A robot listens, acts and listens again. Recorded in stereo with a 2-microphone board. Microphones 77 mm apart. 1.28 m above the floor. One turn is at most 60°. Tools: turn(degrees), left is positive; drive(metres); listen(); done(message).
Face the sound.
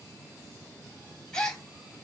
turn(degrees=30)
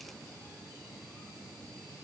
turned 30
listen()
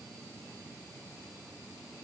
done("I heard a gasp, but can't make it out now. It was about 20° right or 140° left.")